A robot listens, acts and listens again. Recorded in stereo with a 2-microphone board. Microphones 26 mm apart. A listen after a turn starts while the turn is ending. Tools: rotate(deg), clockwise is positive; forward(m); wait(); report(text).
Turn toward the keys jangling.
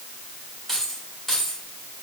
rotate(-30)
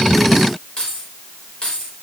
rotate(-140)
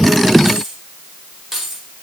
rotate(10)
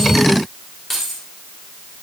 report("Facing the keys jangling.")